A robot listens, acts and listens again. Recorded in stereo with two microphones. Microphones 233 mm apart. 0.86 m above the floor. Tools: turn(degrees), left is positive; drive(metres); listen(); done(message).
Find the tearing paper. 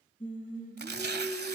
turn(degrees=-45)
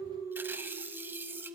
turn(degrees=-10)
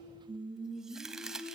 done("Facing the tearing paper.")